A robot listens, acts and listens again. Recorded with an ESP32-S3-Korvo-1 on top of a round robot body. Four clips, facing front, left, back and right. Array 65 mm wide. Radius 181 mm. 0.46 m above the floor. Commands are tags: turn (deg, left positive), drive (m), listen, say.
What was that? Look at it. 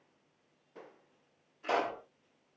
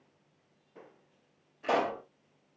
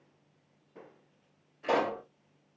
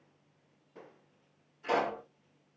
<turn deg="140"/>
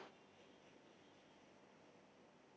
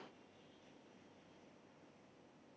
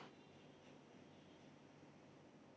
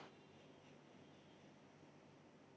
<say>Facing where the pop came from. I can't hear it now.</say>